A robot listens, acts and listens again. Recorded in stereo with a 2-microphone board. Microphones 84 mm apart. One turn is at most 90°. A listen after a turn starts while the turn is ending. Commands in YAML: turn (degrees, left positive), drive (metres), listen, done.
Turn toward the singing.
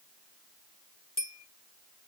listen: true
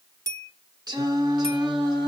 turn: -50
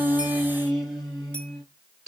done: "Found it: singing, straight ahead."